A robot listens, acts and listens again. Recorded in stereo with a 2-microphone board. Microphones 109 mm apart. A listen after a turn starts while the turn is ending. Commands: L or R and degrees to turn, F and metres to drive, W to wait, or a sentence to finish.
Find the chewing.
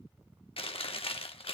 L60
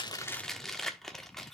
Facing the chewing, 1 to 2 m away.